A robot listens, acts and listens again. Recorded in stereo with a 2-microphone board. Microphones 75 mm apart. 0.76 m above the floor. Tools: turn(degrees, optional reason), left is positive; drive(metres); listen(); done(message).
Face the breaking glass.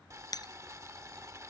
turn(degrees=60, reason="The breaking glass: about 60° left or 120° left.")
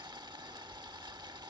listen()
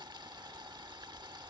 done("I heard breaking glass, but can't make it out now. It was about straight ahead or 60° left.")